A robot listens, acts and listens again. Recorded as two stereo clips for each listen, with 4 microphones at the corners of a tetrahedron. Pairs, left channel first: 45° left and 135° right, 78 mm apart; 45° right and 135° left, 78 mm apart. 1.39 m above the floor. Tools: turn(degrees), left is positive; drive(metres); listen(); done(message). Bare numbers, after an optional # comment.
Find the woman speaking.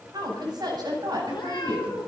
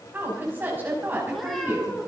# The woman speaking: 160° right.
turn(-160)
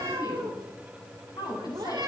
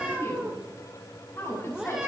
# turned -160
# The woman speaking is now 15° left.
turn(15)
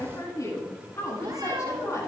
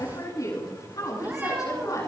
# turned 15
done("Found it: a woman speaking, straight ahead, over 4 m away.")